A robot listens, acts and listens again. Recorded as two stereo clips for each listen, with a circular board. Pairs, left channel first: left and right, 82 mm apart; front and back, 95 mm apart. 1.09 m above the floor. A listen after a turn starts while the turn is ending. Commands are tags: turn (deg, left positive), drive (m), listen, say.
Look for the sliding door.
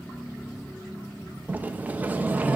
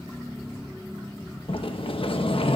<turn deg="-20"/>
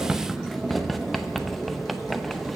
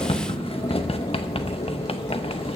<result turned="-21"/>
<say>Found it: a sliding door, straight ahead, under 1 m away.</say>